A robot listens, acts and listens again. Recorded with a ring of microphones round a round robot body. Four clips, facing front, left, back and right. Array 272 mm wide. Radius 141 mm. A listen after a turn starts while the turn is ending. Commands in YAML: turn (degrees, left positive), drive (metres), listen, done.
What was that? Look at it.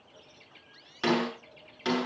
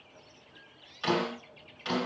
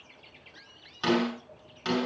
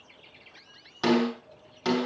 turn: -70
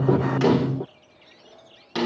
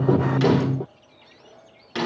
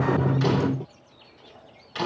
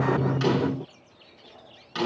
turn: 20
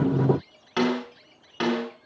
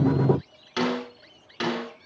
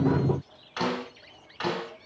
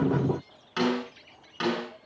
turn: 10
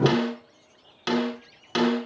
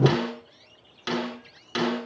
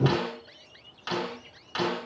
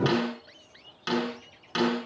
done: "Found it: a snare drum, straight ahead."